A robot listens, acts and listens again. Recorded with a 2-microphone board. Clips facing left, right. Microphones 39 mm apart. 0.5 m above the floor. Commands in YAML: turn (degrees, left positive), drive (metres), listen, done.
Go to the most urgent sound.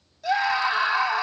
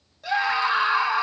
turn: -30
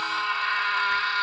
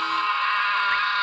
turn: -135
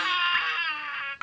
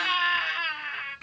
drive: 1.0
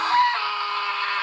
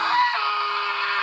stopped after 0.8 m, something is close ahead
done: "I am next to the scream."